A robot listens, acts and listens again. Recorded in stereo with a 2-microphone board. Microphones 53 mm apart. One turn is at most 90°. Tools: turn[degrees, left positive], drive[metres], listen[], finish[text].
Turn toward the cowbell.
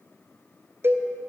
Thought: The cowbell: about 45° right or 135° right.
Action: turn[-45]
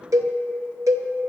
Thought: So it is at 85° right.
Action: turn[-85]
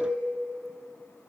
Action: listen[]
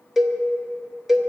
Action: finish[Facing the cowbell, under 1 m away.]